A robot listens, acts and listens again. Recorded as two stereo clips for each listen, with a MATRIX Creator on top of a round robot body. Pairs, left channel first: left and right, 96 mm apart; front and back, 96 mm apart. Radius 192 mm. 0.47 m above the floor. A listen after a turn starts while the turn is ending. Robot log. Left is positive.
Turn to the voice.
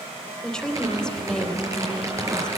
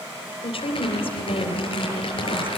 note: The woman speaking: 10° left.
cmd yaw +10
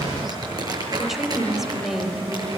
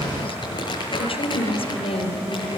end: Found it: a woman speaking, straight ahead, 2 to 4 m away.